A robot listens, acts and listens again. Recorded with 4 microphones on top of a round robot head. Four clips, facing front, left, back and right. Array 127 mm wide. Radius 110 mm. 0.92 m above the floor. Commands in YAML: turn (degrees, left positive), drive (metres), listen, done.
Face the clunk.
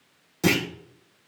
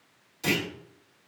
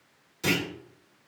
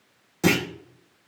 turn: -55
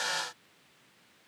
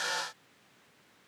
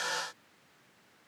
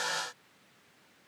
done: "Facing where the clunk came from. I can't hear it now."